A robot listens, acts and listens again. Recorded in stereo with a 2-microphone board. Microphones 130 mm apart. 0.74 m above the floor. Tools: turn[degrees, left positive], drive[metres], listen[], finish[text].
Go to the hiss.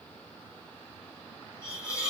Thought: The hiss: about 30° left or 150° left.
Action: turn[30]
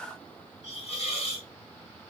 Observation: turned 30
Thought: So it is at 125° left.
Action: turn[125]
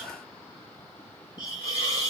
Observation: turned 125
Thought: The hiss is now 30° left.
Action: turn[30]
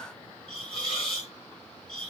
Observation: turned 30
Action: drive[1.0]
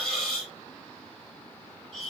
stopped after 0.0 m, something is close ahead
Action: finish[Blocked. The hiss is further on, straight ahead.]